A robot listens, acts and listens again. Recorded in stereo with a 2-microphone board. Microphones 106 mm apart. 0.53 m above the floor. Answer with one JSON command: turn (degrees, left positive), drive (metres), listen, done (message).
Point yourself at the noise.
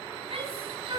{"turn": -50}
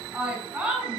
{"done": "Found it: a shout, straight ahead."}